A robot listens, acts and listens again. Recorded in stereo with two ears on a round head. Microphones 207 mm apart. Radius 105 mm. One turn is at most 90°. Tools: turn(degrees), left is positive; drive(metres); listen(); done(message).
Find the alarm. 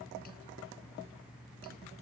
listen()
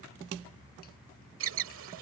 turn(degrees=-65)
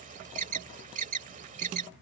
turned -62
turn(degrees=-35)
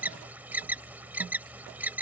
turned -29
turn(degrees=-10)
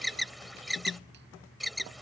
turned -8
done("Found it: an alarm, straight ahead.")